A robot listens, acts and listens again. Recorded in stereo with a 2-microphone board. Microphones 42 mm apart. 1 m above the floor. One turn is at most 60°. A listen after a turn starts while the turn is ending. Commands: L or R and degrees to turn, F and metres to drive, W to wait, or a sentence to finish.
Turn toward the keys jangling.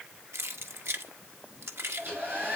R60
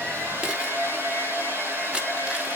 R30
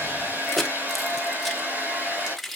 Found it: keys jangling, straight ahead.